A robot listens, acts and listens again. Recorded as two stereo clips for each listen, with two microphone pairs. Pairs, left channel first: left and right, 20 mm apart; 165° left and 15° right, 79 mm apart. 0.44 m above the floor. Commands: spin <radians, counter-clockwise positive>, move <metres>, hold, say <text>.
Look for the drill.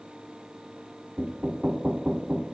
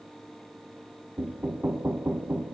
hold
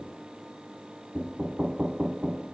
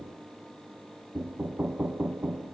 hold
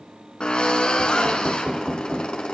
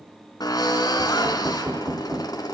spin 2.27
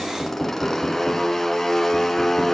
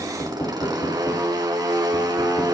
spin 0.26
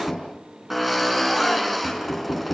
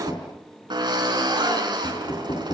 say Found it: a drill, straight ahead.